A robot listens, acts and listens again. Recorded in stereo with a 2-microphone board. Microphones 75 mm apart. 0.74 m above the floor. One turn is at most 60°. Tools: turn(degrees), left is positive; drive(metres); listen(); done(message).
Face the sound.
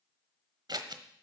turn(degrees=-60)
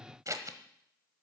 turn(degrees=-50)
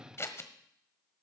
turn(degrees=35)
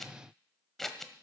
done("Facing the scissors, 1 to 2 m away.")